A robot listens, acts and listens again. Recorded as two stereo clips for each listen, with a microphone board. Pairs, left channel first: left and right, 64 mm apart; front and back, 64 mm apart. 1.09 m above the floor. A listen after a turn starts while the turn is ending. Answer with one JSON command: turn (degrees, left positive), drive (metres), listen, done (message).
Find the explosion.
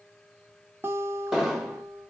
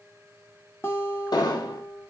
{"turn": -10}
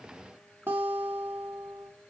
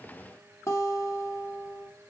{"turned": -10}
{"done": "I heard an explosion from this way, but can't make it out now."}